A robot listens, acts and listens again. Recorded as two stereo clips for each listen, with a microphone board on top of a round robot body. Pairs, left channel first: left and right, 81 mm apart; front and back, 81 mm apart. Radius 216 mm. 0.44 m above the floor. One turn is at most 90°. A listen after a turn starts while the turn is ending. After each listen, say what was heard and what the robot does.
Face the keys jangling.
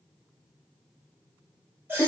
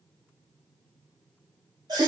Keep listening.
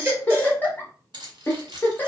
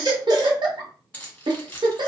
The keys jangling: 70° right. Turn 70° right.
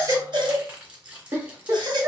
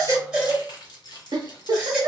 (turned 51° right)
The keys jangling is now 15° right. Turn 15° right.
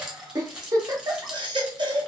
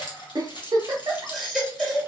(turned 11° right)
Facing the keys jangling.